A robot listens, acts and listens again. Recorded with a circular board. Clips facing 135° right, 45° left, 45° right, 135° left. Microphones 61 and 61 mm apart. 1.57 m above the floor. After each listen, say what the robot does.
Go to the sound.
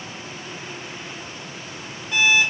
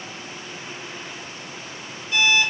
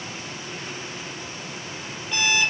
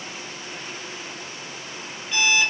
Turn 135° right.
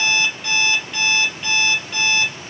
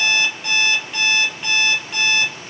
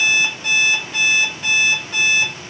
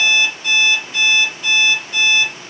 Turn 35° right.
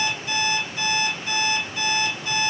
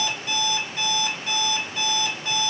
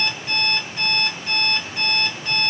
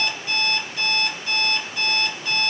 Drive 1.0 m forward.
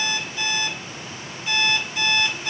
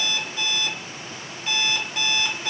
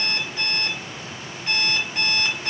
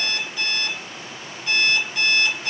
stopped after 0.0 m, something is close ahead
Something is in my way. I am facing the alarm clock but have not reached it.